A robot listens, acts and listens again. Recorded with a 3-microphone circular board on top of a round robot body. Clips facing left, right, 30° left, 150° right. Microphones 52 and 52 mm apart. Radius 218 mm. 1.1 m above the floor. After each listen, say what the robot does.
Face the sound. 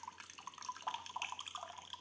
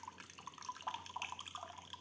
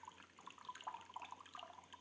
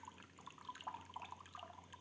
Keep listening.
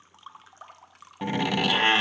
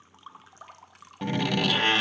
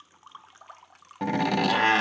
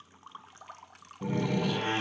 Turn 10° left.
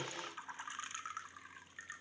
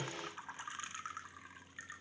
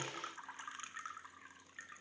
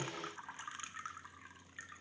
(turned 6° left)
I heard a door slam from this way, but can't make it out now.